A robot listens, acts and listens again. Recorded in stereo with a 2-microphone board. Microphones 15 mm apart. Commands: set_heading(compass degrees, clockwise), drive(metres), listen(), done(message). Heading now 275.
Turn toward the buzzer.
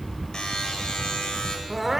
set_heading(210)
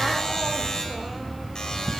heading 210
set_heading(160)
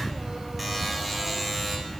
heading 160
done("Found it: a buzzer, straight ahead, 2 to 4 m away.")